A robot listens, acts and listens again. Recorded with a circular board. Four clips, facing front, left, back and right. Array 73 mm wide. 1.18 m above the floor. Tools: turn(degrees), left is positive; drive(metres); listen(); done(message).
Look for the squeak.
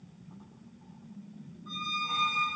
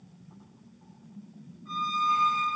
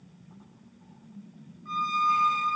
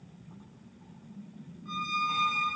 turn(degrees=-170)
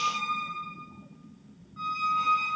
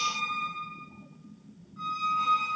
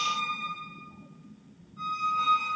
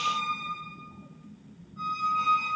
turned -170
turn(degrees=10)
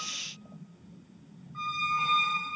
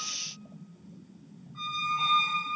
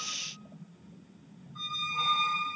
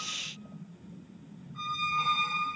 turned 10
done("Facing the squeak, 1 to 2 m away.")